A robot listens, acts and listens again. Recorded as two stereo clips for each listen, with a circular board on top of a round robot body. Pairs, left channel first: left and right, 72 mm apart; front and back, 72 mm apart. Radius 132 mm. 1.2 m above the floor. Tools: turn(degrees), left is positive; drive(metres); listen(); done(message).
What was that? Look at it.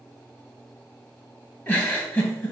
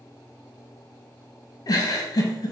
turn(degrees=25)
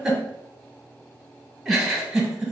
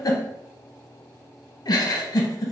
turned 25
turn(degrees=-10)
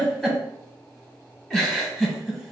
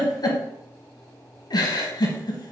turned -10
done("Facing the giggle, 1 to 2 m away.")